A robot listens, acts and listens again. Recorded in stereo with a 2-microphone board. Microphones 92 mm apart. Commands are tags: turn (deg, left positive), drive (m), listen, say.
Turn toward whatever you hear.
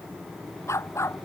<turn deg="30"/>
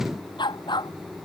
<turn deg="125"/>
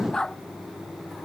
<turn deg="10"/>
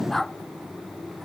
<say>Facing the dog barking.</say>